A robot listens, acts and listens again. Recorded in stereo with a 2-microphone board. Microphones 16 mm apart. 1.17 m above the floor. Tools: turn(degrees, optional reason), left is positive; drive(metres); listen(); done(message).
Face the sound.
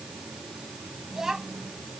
turn(degrees=-30, reason="The child speaking: about 30° right or 150° right.")
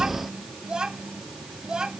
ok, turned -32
turn(degrees=-120, reason="So it is at 120° right.")
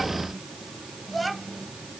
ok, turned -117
done("Facing the child speaking.")